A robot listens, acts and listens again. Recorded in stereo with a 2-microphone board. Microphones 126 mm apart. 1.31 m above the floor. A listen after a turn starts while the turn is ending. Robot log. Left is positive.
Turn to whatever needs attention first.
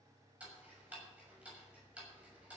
cmd idle
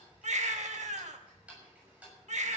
note: The baby crying: about 70° right or 110° right.
cmd yaw -70
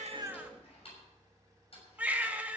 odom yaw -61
note: So it is at 15° right.
cmd yaw -15
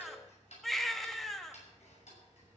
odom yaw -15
end: Found it: a baby crying, straight ahead.